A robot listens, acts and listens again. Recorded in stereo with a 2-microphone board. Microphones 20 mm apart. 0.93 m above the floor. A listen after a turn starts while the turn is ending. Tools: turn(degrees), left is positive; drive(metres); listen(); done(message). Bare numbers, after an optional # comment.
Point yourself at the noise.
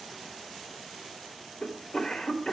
# The cough: about 65° left or 115° left.
turn(65)
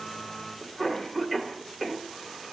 done("Facing the cough.")